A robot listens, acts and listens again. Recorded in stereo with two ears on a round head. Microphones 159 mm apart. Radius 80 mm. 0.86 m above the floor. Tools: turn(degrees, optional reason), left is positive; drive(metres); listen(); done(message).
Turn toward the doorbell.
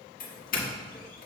turn(degrees=50, reason="The doorbell: about 50° left or 130° left.")
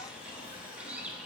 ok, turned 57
listen()
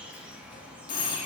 turn(degrees=60, reason="So it is at 60° left.")
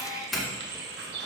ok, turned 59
done("Found it: a doorbell, straight ahead.")